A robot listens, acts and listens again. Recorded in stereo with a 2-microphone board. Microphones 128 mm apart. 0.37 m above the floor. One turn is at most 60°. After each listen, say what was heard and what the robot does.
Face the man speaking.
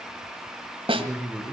Turn 30° right.
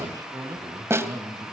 So it is at 160° right. Turn 60° right.
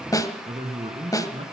The man speaking is now 125° right. Turn 60° right.
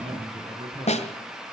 The man speaking is now 50° right. Turn 50° right.
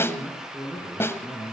Facing the man speaking.